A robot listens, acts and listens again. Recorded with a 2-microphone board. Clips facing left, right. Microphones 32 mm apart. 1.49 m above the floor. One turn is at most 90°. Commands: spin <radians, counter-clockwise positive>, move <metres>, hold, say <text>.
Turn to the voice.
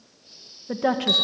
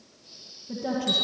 spin 1.13
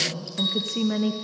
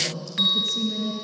spin 0.87
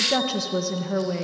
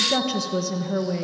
say Found it: a woman speaking, straight ahead.